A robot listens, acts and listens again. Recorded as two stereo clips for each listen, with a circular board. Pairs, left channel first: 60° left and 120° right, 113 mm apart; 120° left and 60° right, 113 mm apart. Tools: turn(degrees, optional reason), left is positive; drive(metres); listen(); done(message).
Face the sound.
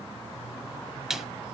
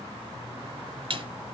turn(degrees=-35, reason="The snare drum: 35° right.")
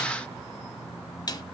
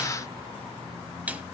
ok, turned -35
turn(degrees=15, reason="The snare drum is now 15° left.")
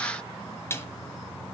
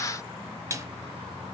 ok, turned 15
done("Found it: a snare drum, straight ahead.")